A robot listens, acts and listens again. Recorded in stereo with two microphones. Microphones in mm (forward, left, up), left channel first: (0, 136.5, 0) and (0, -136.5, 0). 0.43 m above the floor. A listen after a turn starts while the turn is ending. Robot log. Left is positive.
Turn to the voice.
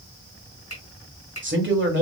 note: The man speaking: about 45° right or 135° right.
cmd yaw -45
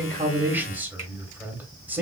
note: So it is at 10° right.
cmd yaw -10
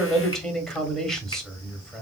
end: Facing the man speaking, 1 to 2 m away.